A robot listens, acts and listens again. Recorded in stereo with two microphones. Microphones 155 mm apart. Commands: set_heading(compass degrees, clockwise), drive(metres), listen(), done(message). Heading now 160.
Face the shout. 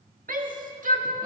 set_heading(220)
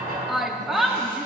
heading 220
done("Facing the shout, 1 to 2 m away.")